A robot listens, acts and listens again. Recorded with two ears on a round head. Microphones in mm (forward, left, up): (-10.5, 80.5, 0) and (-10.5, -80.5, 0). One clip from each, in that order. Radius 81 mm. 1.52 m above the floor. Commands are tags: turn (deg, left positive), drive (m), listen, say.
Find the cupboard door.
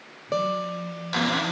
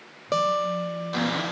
<turn deg="45"/>
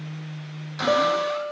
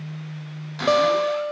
<say>Facing the cupboard door.</say>